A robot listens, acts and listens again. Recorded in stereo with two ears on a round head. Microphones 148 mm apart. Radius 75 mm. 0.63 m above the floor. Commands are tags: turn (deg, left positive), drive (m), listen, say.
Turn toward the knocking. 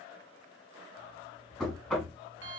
<turn deg="30"/>
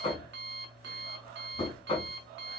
<turn deg="145"/>
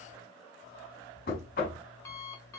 <turn deg="55"/>
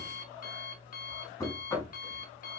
<turn deg="20"/>
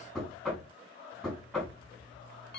<say>Found it: knocking, straight ahead.</say>